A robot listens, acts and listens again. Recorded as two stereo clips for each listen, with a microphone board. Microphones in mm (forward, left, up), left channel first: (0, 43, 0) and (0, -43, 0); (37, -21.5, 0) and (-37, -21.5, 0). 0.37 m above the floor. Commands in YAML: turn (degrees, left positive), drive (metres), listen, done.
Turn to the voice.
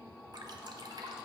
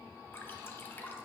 listen: true
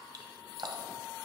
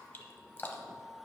listen: true
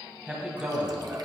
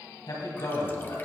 turn: -15
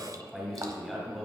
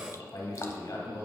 done: "Found it: a man speaking, straight ahead."